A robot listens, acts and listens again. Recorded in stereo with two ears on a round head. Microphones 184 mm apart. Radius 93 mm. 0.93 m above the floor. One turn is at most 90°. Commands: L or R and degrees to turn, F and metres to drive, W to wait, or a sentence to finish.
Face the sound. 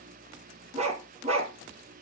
R35
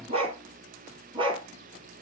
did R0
R25
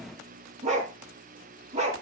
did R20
R35
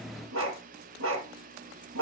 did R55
R85
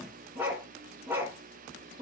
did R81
R10
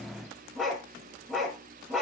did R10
Facing the dog barking.